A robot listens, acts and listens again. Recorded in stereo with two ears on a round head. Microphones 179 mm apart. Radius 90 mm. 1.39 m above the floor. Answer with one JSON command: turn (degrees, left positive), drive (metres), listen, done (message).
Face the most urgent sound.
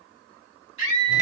{"turn": -90}
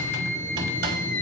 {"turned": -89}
{"turn": 10}
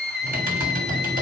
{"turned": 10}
{"done": "Facing the scream."}